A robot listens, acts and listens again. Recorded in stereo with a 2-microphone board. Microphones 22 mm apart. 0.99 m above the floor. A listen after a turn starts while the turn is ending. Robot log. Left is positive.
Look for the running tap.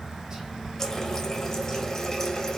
note: The running tap: about 20° left or 160° left.
cmd yaw +20
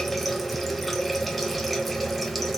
end: Facing the running tap, under 1 m away.